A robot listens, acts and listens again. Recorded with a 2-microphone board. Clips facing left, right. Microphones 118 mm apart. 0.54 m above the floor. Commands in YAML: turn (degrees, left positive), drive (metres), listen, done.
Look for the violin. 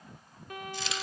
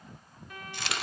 turn: 55
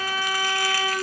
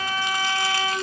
turn: 25
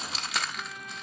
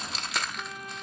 done: "Found it: a violin, straight ahead, 2 to 4 m away."